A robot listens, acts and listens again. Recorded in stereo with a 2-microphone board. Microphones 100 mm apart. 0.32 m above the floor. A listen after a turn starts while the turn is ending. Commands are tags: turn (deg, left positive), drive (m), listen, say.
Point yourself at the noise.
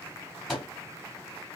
<turn deg="30"/>
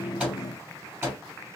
<turn deg="-30"/>
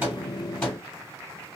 <turn deg="10"/>
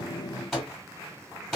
<say>Facing the microwave.</say>